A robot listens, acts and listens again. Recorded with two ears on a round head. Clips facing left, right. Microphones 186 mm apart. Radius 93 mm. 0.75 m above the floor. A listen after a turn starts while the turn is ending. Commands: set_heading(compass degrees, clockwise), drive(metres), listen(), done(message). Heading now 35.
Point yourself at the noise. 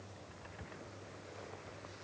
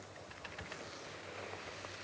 listen()
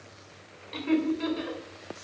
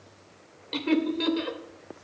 set_heading(90)
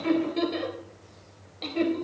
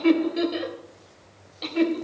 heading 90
set_heading(100)
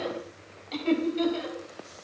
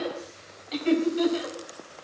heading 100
done("Facing the laughter, over 4 m away.")